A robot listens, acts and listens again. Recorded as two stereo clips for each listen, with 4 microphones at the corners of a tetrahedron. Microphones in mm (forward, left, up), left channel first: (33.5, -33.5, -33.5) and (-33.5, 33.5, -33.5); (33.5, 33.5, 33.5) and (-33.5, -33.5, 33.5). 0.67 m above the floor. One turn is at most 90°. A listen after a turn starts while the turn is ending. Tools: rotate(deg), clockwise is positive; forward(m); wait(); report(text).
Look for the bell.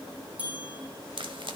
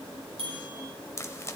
rotate(90)
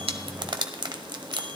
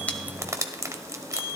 rotate(90)
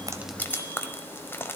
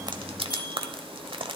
wait()
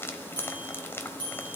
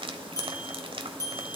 rotate(10)
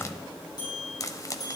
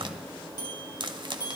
report("Facing the bell, over 4 m away.")